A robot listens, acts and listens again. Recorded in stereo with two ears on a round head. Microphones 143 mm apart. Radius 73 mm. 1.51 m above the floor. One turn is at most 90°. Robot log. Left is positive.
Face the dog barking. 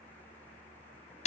cmd idle
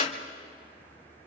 cmd idle
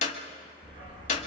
note: The dog barking: about 30° right or 150° right.
cmd yaw -30
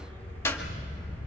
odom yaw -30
note: So it is at 10° left.
cmd yaw +10
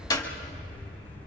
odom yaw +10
note: The dog barking is now 10° left.
cmd yaw +10
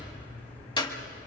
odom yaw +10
note: The dog barking is now 10° left.
cmd yaw +10
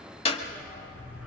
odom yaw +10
end: Facing the dog barking.